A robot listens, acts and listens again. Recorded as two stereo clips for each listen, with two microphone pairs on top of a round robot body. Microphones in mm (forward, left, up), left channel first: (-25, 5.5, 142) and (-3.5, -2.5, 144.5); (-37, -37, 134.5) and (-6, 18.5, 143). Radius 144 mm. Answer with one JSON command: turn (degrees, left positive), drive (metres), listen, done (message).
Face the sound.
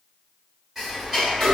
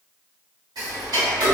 {"turn": 50}
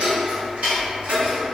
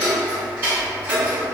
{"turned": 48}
{"done": "Found it: ticking, straight ahead, 1 to 2 m away."}